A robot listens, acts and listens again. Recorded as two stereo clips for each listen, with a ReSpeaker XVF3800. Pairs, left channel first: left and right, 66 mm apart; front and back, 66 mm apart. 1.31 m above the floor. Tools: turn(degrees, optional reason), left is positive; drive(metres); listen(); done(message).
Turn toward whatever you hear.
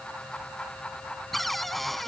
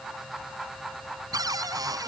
turn(degrees=180, reason="The cupboard door: straight behind.")
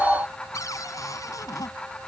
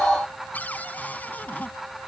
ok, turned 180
turn(degrees=65, reason="The cupboard door is now 65° left.")
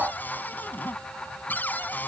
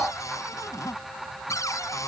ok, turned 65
turn(degrees=30, reason="The cupboard door is now 30° left.")
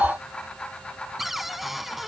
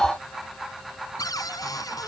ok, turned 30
done("Facing the cupboard door.")